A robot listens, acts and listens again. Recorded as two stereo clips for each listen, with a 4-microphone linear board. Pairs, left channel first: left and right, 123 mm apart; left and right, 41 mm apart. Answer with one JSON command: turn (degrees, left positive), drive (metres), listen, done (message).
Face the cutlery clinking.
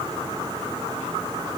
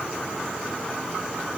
{"listen": true}
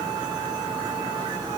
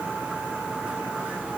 {"listen": true}
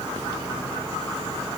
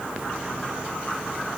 {"done": "I can't make out cutlery clinking."}